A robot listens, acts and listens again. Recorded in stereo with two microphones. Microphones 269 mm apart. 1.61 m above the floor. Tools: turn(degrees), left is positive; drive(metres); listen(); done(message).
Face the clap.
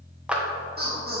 turn(degrees=-30)
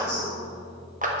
turn(degrees=-145)
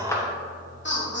turn(degrees=10)
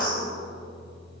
listen()
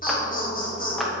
done("Facing the clap, under 1 m away.")